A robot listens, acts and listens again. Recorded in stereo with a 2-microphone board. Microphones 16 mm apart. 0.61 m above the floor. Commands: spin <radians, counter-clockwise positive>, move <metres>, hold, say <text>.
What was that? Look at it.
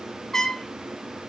spin 0.52
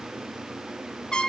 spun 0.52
spin 1.92
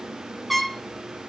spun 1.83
say Facing the trumpet, 1 to 2 m away.